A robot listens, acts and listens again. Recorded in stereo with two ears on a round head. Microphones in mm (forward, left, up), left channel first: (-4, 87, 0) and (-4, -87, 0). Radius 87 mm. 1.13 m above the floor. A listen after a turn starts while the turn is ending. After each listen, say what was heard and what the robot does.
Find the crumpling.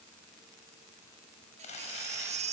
The crumpling: about 35° left or 145° left. Turn 35° left.
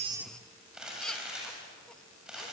Found it: crumpling, straight ahead, over 4 m away.